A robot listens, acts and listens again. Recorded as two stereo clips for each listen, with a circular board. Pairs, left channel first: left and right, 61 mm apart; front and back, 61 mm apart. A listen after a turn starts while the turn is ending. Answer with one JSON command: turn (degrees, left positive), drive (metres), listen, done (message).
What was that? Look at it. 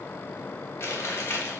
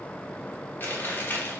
{"turn": 50}
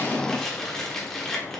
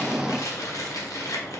{"done": "Found it: chewing, straight ahead."}